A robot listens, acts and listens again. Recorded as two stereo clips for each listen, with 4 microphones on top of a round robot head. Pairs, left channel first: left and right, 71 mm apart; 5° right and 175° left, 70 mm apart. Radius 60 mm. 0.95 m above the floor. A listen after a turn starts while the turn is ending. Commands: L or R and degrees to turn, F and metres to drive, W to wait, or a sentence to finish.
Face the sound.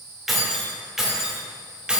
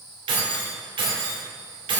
R165
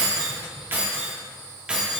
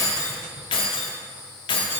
Facing the keys jangling, 1 to 2 m away.